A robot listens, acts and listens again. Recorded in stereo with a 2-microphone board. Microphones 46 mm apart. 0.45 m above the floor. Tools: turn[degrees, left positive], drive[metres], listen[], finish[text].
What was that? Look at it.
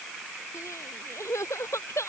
Action: turn[90]
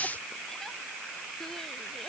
Action: listen[]
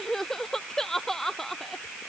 Action: finish[Found it: crying, straight ahead.]